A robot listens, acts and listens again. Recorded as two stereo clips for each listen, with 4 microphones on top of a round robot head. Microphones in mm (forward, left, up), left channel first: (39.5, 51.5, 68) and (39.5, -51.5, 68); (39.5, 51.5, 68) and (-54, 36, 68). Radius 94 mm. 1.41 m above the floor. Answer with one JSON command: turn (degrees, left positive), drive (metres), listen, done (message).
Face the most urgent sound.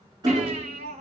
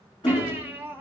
{"turn": -95}
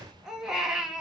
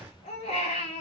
{"done": "Found it: a baby crying, straight ahead."}